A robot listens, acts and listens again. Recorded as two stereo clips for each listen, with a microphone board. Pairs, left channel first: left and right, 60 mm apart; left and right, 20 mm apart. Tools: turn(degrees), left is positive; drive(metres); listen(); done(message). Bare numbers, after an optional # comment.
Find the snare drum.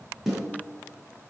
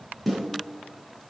turn(-30)
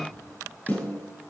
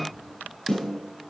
# So it is at 25° left.
turn(25)
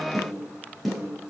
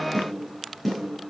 done("Facing the snare drum, over 4 m away.")